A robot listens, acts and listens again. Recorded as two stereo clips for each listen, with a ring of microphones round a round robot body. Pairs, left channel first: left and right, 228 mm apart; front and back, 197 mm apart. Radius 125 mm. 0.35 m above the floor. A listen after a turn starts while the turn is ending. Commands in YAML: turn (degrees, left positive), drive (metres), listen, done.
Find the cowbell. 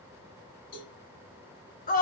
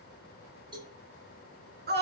turn: 110
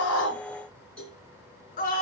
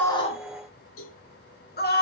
done: "Facing the cowbell, over 4 m away."